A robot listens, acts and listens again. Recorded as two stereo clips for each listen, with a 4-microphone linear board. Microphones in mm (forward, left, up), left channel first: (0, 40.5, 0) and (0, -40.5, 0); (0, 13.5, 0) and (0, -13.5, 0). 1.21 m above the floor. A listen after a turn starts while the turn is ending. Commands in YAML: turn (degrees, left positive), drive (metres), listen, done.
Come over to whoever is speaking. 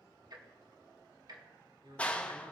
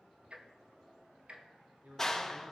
turn: -90
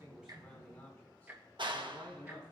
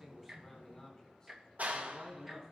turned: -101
turn: 20
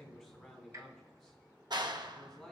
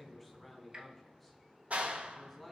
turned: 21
drive: 1.0
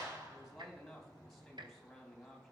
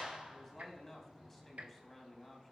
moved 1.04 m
drive: 1.0
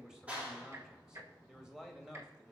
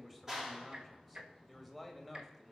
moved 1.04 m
drive: 1.0
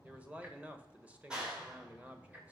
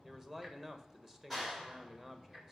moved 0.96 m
turn: -20
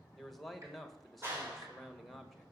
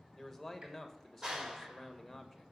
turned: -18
drive: 1.0
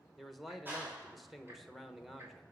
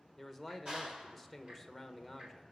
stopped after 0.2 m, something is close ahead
done: "Arrived at the man speaking, straight ahead."